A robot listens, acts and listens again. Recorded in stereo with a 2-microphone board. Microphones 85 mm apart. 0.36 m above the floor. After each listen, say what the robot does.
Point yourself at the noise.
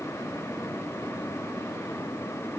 Keep listening.
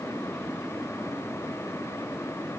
Keep listening.
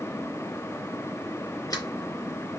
Turn 45° left.
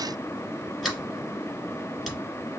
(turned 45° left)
Found it: a sliding door, straight ahead.